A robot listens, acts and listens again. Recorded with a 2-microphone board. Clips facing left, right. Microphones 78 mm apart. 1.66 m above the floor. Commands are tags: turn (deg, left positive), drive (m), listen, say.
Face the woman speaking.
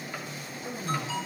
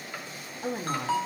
<turn deg="-65"/>
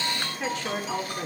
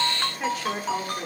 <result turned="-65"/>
<say>Found it: a woman speaking, straight ahead, over 4 m away.</say>